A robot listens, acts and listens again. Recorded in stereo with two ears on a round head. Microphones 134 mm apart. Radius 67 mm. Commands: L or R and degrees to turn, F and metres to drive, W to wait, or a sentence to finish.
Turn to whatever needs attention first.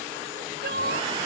R75
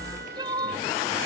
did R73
R30
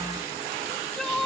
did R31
Found it: crying, straight ahead.